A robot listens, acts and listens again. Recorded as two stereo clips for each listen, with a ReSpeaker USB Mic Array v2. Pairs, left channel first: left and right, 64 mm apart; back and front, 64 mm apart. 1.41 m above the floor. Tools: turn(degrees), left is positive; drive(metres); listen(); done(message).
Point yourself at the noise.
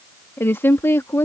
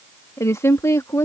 turn(degrees=135)
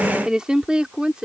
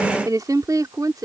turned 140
turn(degrees=-15)
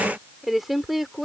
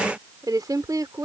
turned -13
done("Found it: a woman speaking, straight ahead.")